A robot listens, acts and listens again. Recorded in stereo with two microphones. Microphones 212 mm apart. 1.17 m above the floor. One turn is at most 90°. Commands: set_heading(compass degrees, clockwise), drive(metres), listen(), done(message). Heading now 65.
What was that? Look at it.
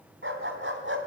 set_heading(135)
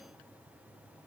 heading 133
listen()
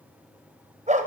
set_heading(168)
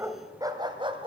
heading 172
set_heading(197)
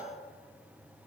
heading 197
listen()
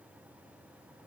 listen()
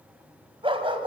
set_heading(222)
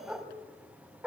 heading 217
done("Found it: a dog barking, straight ahead, 2 to 4 m away.")